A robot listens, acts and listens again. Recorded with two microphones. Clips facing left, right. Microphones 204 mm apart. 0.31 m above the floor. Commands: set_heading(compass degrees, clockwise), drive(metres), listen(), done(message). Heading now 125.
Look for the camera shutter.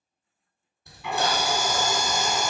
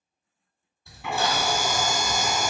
set_heading(105)
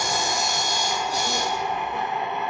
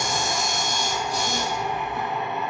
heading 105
set_heading(325)
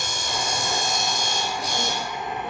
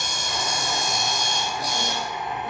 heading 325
set_heading(300)
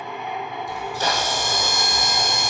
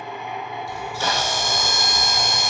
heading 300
set_heading(285)
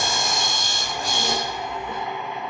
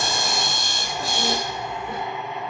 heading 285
done("Facing the camera shutter, 1 to 2 m away.")